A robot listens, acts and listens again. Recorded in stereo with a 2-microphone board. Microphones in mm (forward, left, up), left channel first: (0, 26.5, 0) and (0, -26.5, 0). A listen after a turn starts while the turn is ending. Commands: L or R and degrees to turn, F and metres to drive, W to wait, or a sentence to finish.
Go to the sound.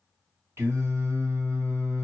R55
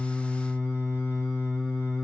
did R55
R60
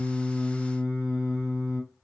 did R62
F1.0
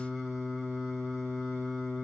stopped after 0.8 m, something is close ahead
Arrived at the singing, straight ahead.